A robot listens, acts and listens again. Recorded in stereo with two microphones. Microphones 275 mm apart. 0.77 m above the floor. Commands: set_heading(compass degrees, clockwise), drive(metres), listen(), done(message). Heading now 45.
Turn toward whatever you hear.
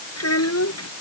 set_heading(340)
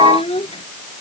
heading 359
set_heading(339)
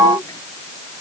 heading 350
set_heading(340)
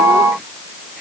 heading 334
listen()
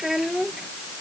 done("Found it: a child speaking, straight ahead.")